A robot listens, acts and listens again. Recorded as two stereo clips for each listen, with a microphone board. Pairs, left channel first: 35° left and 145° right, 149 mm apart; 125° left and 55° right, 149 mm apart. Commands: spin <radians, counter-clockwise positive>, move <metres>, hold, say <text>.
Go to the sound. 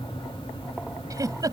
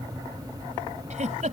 spin -1.40
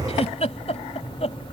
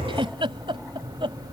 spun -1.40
move 1.0
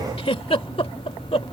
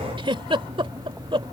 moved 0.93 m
spin -0.17
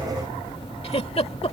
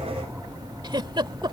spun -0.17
move 1.0
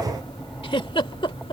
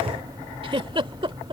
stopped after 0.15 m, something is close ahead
spin -0.17
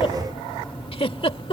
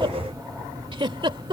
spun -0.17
spin -0.17
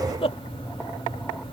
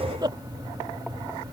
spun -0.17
say I am next to the giggle.